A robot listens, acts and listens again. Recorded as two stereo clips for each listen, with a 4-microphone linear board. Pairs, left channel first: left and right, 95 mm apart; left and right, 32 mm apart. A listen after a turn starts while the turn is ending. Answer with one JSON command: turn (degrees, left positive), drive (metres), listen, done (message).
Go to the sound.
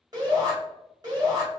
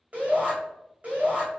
{"turn": -40}
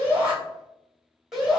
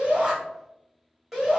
{"drive": 1.0}
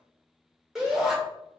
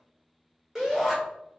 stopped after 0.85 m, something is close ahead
{"done": "Arrived at the shout, straight ahead."}